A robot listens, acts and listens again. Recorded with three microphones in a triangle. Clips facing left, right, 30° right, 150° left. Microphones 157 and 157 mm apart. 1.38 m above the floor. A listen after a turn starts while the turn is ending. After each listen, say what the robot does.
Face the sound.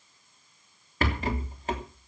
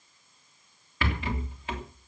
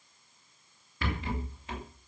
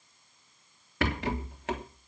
Turn 140° left.
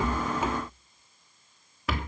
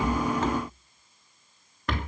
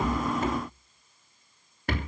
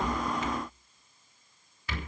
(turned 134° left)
Found it: a rattle, straight ahead, 2 to 4 m away.